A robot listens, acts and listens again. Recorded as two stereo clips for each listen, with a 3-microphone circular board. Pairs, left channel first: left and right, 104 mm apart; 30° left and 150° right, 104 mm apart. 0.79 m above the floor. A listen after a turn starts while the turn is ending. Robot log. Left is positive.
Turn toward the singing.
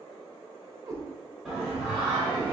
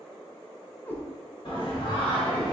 note: The singing: 10° right.
cmd yaw -10
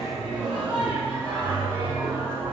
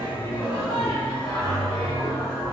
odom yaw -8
note: The singing is now 30° right.
cmd yaw -30
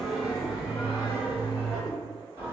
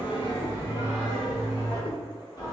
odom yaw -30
note: The singing is now 20° right.
cmd yaw -20
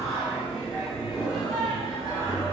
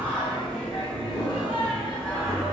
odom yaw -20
end: Found it: singing, straight ahead, 2 to 4 m away.